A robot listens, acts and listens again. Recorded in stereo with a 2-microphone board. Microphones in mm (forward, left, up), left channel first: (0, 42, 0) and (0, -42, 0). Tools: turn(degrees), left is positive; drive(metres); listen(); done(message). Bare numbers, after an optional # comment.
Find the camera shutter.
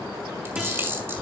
# The camera shutter: about 25° right or 155° right.
turn(-25)
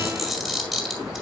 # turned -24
done("Facing the camera shutter.")